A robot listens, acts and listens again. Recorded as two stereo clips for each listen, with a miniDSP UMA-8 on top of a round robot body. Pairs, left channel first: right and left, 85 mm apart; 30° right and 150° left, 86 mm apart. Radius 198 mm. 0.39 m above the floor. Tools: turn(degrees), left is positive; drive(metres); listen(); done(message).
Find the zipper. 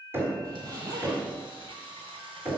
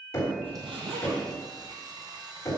turn(degrees=140)
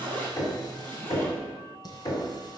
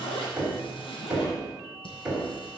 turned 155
turn(degrees=-20)
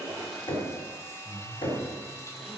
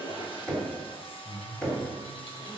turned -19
done("Facing the zipper, 2 to 4 m away.")